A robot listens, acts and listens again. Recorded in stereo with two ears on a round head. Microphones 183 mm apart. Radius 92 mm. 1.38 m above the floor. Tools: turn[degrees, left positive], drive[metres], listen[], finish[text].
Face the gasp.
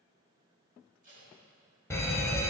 Action: listen[]
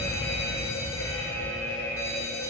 Action: listen[]
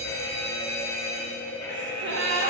Thought: The gasp: about 60° right or 120° right.
Action: turn[-60]
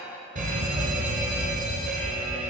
Action: listen[]
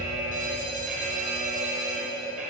Action: finish[I heard a gasp, but can't make it out now. It was about straight ahead or 60° right.]